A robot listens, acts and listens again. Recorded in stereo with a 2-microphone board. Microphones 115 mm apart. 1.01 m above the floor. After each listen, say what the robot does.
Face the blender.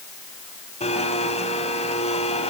Turn 65° left.
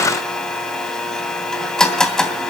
Found it: a blender, straight ahead.